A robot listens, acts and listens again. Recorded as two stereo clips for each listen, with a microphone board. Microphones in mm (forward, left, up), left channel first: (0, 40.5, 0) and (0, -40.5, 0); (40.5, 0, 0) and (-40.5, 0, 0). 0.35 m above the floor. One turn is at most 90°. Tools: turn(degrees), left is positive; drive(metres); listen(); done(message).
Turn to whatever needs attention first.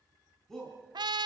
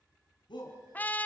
done("Found it: a shout, straight ahead, 2 to 4 m away.")